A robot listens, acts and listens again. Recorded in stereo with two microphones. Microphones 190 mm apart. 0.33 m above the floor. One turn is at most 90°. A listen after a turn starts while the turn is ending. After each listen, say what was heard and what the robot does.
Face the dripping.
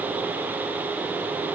Keep listening.
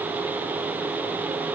Keep listening.
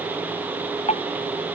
The dripping: about 35° left or 145° left. Turn 35° left.
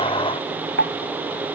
So it is at 110° left. Turn 90° left.
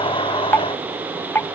The dripping is now 10° left. Turn 10° left.
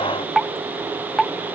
Found it: dripping, straight ahead.